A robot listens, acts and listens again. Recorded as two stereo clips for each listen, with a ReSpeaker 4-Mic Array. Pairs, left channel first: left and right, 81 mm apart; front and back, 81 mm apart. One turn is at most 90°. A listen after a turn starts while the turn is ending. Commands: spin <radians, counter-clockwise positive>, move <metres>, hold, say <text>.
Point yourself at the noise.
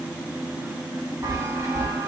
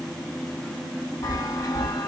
spin -0.70
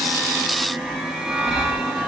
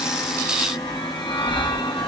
say Facing the chime.